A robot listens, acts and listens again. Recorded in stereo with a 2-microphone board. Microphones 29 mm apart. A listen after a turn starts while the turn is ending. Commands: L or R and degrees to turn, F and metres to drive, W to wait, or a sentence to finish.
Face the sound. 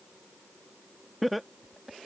L30
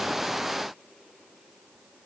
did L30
W
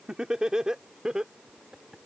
R25
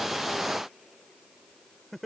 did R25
Found it: laughter, straight ahead.